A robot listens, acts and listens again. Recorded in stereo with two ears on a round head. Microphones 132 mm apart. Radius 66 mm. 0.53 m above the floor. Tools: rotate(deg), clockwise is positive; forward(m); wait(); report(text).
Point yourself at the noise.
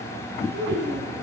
rotate(90)
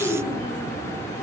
rotate(-10)
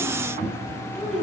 report("Found it: a child speaking, straight ahead, over 4 m away.")